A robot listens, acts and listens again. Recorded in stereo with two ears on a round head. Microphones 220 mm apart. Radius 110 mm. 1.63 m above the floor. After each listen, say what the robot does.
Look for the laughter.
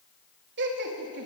Turn 45° right.
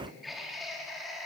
Found it: laughter, straight ahead.